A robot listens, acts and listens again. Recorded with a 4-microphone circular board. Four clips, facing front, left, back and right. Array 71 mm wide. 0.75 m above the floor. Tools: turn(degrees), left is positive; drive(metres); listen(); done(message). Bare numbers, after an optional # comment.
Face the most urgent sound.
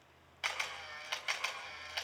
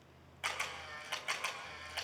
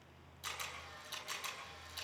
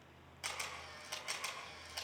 listen()
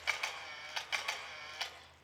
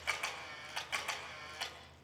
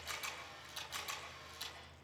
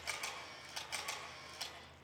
listen()
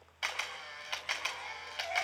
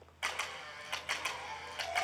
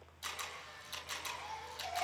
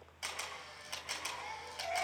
# The baby crying: 30° right.
turn(-30)
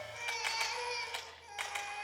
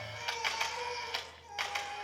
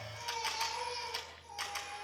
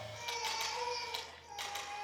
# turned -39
# The baby crying is now 10° left.
turn(10)
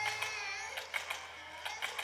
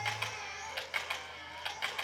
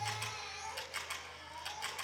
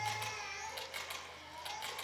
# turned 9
done("Facing the baby crying.")